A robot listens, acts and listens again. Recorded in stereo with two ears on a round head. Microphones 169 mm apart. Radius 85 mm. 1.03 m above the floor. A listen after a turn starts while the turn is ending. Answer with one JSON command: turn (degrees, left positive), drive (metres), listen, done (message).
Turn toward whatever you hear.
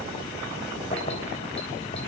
{"turn": 35}
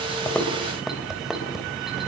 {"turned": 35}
{"done": "Facing the keys jangling, 2 to 4 m away."}